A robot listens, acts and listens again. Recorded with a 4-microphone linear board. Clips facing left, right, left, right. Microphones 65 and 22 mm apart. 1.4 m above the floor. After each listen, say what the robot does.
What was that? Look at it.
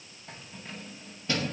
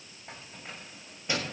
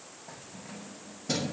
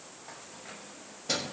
Turn 15° right.
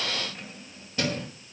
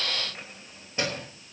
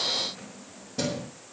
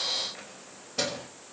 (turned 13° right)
Turn 25° right.
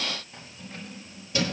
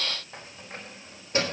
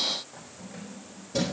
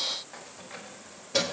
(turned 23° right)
Turn 140° right.
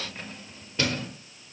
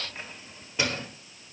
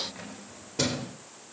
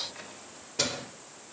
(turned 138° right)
Turn 15° right.
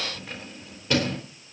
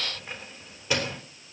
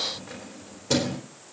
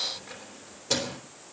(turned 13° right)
Facing the keys jangling, 2 to 4 m away.